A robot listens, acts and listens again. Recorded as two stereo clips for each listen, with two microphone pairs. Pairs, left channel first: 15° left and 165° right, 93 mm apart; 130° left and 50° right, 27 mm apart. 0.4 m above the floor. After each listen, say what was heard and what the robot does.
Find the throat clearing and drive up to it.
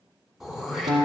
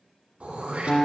The throat clearing: 75° right. Turn 75° right.
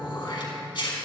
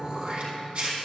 The throat clearing is now 15° right. Turn 15° right.
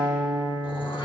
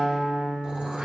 Keep listening.
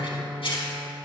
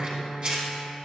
Drive 1.0 m forward.
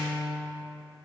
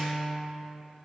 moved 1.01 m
Keep listening.
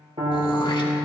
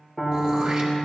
Keep listening.
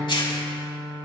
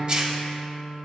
Drive 1.0 m forward.
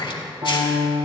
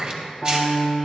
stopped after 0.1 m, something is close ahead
Arrived at the throat clearing, straight ahead.